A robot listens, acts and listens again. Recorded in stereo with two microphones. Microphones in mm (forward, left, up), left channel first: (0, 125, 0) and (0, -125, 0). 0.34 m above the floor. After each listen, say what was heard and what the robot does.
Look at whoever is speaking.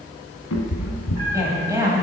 Turn 30° right.
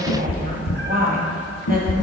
So it is at 135° right. Turn 135° right.
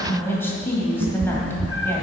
The woman speaking is now 10° left. Turn 10° left.
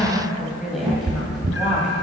Facing the woman speaking.